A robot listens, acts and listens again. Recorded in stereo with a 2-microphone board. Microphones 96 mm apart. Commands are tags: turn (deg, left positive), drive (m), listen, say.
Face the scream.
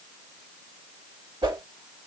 <listen/>
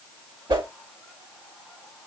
<listen/>
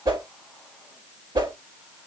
<say>I can't make out a scream to turn to.</say>